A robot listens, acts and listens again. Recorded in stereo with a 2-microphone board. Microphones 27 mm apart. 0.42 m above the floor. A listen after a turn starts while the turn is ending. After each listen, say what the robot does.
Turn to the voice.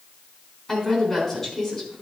Turn 20° left.
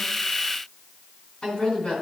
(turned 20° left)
Turn 140° left.
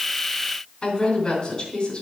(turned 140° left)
Turn 35° left.
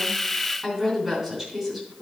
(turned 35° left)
Turn 10° right.
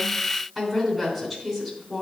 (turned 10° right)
Facing the woman speaking, 2 to 4 m away.